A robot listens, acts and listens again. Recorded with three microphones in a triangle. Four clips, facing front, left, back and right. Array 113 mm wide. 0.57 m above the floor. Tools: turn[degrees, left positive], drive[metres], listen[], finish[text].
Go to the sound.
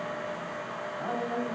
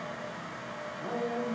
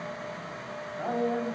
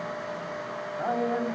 Thought: The man speaking: 100° right.
Action: turn[-100]
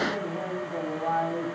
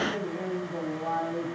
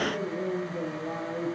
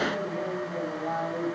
Action: drive[1.0]
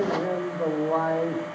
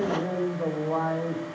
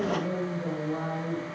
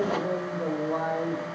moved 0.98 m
Action: drive[1.0]
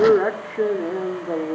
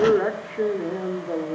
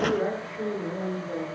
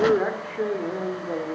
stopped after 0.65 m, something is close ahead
Action: finish[I am next to the man speaking.]